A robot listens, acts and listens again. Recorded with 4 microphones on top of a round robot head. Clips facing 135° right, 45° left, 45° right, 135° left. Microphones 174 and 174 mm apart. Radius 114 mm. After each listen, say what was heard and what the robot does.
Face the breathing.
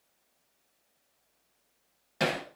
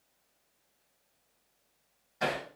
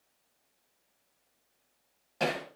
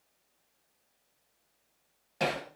Keep listening.
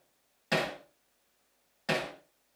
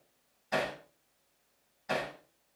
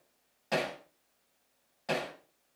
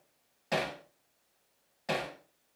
Keep listening.
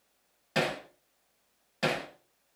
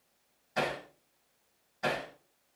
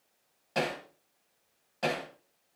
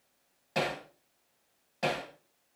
I can't make out breathing to turn to.